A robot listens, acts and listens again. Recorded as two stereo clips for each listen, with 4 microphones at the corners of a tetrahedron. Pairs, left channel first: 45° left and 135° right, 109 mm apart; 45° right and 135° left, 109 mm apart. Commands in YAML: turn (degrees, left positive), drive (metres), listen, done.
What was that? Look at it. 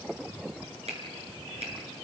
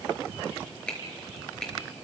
turn: -125
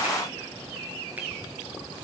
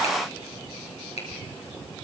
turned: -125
turn: -60
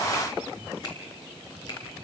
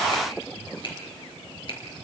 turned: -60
done: "Found it: a finger snap, straight ahead."